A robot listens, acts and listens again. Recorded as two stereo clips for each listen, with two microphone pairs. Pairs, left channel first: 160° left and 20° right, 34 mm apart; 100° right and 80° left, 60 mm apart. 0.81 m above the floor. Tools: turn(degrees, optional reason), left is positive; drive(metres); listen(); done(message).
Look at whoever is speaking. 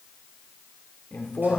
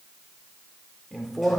turn(degrees=175, reason="The man speaking: 175° left.")
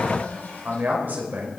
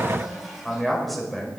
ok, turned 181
turn(degrees=-10, reason="The man speaking is now 10° right.")
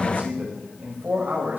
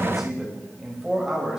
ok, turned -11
done("Found it: a man speaking, straight ahead, over 4 m away.")